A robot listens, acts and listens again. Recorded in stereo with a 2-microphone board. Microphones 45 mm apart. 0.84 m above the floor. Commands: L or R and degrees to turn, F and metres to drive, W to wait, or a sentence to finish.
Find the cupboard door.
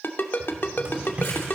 R35
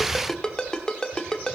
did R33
W
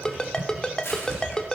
R110
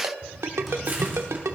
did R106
Found it: a cupboard door, straight ahead.